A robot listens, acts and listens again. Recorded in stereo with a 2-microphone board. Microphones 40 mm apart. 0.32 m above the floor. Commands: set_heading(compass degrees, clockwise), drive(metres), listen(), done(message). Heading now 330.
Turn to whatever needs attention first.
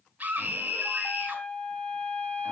set_heading(15)
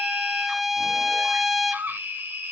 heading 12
set_heading(97)
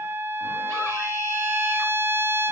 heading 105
listen()
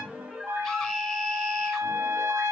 done("Found it: a scream, straight ahead, 2 to 4 m away.")